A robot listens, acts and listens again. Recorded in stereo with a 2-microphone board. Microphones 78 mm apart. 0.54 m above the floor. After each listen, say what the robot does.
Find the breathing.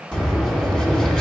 Turn 30° left.
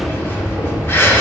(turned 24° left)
Turn 150° left.
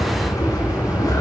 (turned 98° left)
Turn 50° left.
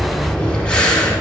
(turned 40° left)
Turn 10° left.
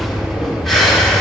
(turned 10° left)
Found it: breathing, straight ahead, 1 to 2 m away.